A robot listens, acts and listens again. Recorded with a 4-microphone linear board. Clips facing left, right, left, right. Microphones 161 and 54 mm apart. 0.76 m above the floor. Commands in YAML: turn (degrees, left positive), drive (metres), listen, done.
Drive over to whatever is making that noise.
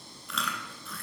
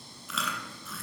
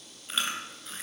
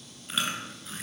turn: 30
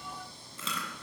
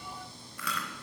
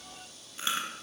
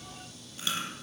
turn: 155
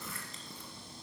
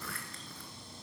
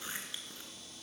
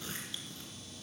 turn: 20
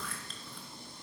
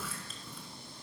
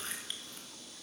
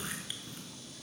drive: 1.0
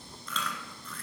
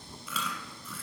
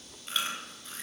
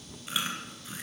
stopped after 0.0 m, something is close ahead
turn: -10
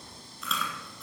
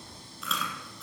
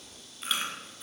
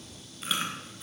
done: "Something is in my way. I am facing the chewing but have not reached it."